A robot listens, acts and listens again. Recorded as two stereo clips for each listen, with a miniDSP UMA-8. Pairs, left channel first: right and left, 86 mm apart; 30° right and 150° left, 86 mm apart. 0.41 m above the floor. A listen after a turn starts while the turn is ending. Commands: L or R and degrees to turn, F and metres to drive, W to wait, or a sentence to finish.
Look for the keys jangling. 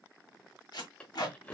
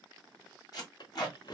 R15
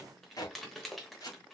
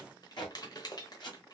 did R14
Found it: keys jangling, straight ahead.